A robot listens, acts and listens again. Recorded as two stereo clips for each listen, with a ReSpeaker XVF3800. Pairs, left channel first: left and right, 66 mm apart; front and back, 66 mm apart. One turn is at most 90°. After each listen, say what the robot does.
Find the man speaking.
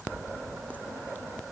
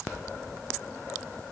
Keep listening.
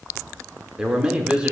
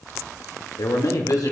Turn 20° right.
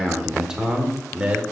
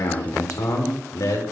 Turn 20° right.
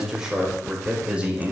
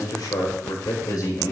Turn 20° right.
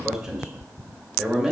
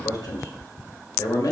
Turn 10° right.
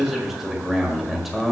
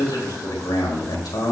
Facing the man speaking.